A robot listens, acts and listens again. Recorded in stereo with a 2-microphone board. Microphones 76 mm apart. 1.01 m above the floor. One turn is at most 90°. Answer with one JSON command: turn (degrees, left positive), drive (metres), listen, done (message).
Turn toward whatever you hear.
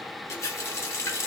{"turn": 40}
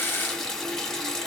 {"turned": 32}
{"turn": 10}
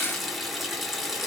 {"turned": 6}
{"done": "Found it: a running tap, straight ahead, under 1 m away."}